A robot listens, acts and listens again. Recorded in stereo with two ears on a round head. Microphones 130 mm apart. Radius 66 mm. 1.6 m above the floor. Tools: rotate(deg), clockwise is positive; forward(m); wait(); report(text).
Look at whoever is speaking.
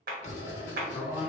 rotate(30)
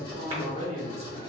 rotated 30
rotate(135)
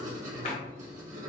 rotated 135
wait()
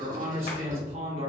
rotate(40)
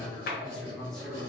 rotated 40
report("Found it: a man speaking, straight ahead, 1 to 2 m away.")